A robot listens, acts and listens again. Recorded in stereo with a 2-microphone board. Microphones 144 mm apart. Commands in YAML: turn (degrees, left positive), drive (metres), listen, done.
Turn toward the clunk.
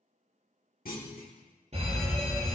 turn: 90
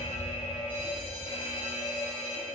done: "Facing where the clunk came from. I can't hear it now."